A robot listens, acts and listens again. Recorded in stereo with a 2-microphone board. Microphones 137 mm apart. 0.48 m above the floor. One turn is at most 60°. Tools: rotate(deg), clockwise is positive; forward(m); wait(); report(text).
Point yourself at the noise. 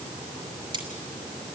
rotate(35)
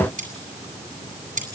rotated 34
rotate(60)
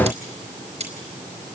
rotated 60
rotate(50)
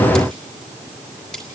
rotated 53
report("Facing the cutlery clinking.")